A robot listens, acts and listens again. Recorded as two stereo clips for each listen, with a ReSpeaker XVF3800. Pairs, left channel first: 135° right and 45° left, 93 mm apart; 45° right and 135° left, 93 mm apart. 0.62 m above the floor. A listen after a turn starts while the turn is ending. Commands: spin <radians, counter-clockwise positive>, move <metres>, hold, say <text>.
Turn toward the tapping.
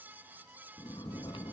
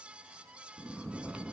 hold
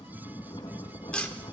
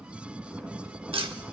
spin 2.62
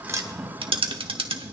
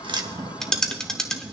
spin 0.70
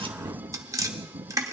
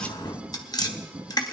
say Facing the tapping.